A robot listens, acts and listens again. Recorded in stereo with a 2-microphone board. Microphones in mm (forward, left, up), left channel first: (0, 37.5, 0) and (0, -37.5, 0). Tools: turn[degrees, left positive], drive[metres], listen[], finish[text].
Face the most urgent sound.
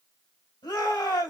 Thought: The shout: about 65° left or 115° left.
Action: turn[65]
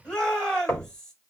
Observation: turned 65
Thought: So it is at 10° left.
Action: turn[10]
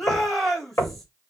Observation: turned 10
Action: finish[Found it: a shout, straight ahead.]